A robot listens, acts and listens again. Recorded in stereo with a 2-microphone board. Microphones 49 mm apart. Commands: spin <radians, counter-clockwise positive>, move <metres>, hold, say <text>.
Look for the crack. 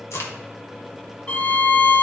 spin 1.22
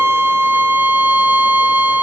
hold
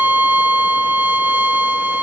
say I heard a crack, but can't make it out now. It was about straight ahead or 40° left.